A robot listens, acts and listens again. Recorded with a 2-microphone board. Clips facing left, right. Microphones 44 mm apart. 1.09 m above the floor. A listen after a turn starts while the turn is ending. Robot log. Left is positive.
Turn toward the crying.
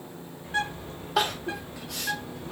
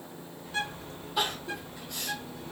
cmd yaw +90
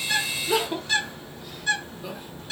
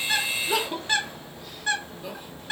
end: Found it: crying, straight ahead.